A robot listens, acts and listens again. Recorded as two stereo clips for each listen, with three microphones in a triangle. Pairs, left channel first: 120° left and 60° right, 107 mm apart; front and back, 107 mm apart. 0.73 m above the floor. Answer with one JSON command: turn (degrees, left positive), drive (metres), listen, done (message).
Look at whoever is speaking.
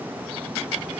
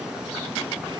{"listen": true}
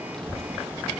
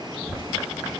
{"turn": 35}
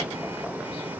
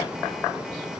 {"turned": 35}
{"listen": true}
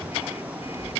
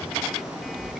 {"done": "Facing the child speaking."}